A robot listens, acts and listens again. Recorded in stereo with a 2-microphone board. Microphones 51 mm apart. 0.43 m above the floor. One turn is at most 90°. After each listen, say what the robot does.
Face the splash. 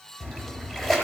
Turn 30° left.
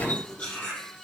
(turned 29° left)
Keep listening.
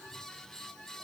I heard a splash, but can't make it out now. It was about 20° right or 145° left.